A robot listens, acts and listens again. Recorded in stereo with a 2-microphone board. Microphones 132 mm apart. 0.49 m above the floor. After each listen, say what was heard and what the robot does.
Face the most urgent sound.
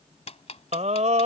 The scream: about 60° right or 120° right. Turn 60° right.
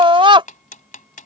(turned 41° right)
So it is at 50° right. Turn 50° right.
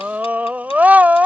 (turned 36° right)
The scream is now 15° right. Turn 15° right.
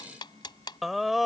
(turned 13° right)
Facing the scream.